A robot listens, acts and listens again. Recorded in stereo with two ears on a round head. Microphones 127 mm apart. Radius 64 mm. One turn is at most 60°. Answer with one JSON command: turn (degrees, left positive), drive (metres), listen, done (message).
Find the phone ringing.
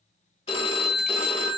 {"turn": 40}
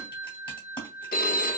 {"turn": 60}
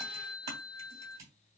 {"turn": 30}
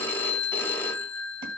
{"turn": 20}
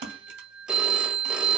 {"turn": -10}
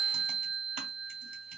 {"done": "Found it: a phone ringing, straight ahead, under 1 m away."}